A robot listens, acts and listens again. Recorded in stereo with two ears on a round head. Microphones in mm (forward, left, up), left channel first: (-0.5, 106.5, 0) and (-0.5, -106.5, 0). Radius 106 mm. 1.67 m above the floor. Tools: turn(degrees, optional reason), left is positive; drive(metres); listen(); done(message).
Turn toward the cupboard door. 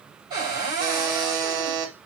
turn(degrees=-20, reason="The cupboard door: about 20° right or 160° right.")
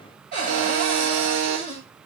turn(degrees=-135, reason="So it is at 135° right.")
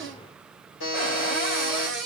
done("Found it: a cupboard door, straight ahead, 2 to 4 m away.")